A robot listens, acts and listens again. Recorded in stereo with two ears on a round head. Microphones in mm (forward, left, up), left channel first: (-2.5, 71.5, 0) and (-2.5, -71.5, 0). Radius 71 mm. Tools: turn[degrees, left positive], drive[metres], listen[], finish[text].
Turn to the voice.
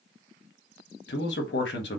Action: turn[90]
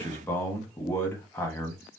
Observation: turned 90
Thought: So it is at 15° left.
Action: turn[15]
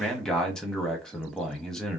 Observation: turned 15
Action: finish[Facing the man speaking, 1 to 2 m away.]